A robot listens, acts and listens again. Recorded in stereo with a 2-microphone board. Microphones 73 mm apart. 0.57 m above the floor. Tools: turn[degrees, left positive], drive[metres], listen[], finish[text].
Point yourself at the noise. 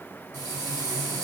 Thought: The frying: about 50° right or 130° right.
Action: turn[-50]
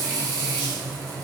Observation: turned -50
Thought: So it is at 75° right.
Action: turn[-75]
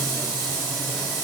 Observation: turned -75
Action: finish[Facing the frying, 1 to 2 m away.]